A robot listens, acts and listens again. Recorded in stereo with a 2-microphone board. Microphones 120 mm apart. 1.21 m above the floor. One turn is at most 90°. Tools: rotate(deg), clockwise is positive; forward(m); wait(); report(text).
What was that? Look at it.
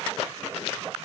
wait()
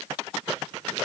wait()
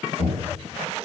rotate(-55)
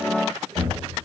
report("Facing the knocking, 2 to 4 m away.")